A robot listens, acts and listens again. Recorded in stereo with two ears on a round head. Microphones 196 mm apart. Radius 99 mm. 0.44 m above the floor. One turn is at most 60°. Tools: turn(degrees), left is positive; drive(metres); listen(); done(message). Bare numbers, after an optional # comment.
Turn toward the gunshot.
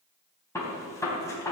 turn(30)
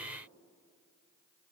listen()
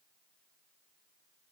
done("I heard a gunshot, but can't make it out now. It was about 15° right or 135° left.")